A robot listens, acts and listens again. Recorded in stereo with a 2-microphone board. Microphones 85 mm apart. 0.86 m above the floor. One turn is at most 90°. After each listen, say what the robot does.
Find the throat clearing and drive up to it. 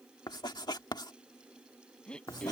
Turn 30° left.
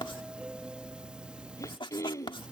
Turn 90° left.
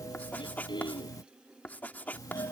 Turn 70° left.
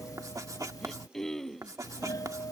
Drive 1.0 m forward.
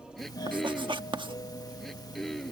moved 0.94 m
Drive 1.0 m forward.
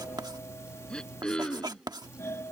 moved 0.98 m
Turn 10° left.
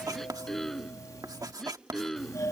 Drive 1.0 m forward.
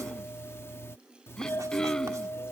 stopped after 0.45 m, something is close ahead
Turn 10° left.
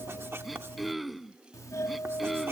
Arrived at the throat clearing, straight ahead.